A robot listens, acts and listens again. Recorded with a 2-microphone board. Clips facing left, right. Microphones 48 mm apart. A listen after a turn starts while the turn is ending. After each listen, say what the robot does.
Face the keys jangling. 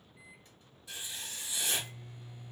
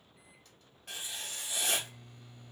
Keep listening.
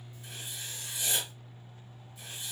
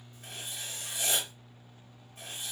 Keep listening.
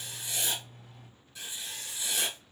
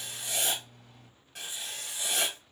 I can't make out keys jangling to turn to.